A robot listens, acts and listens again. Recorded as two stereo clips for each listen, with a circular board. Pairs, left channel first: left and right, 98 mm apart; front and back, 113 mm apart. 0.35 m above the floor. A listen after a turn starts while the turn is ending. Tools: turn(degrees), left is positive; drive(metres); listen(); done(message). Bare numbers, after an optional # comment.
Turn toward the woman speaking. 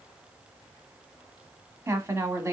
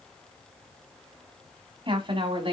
# The woman speaking: 150° right.
turn(-150)
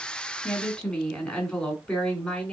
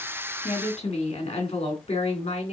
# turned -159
# The woman speaking is now 10° left.
turn(10)
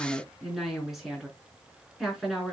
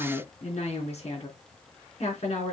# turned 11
done("Found it: a woman speaking, straight ahead.")